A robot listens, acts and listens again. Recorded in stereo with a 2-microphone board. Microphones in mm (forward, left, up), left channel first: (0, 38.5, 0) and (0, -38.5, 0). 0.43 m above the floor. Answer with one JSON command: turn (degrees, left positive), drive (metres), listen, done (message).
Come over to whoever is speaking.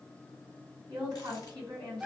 {"turn": -60}
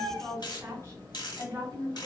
{"turn": -40}
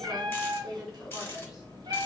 {"drive": 1.0}
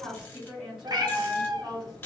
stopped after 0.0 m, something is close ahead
{"done": "Blocked. The woman speaking is further on, straight ahead."}